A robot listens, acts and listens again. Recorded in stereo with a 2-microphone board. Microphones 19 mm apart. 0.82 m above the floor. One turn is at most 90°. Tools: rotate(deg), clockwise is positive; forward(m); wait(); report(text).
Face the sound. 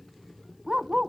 rotate(50)
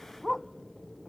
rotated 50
report("Found it: a dog barking, straight ahead.")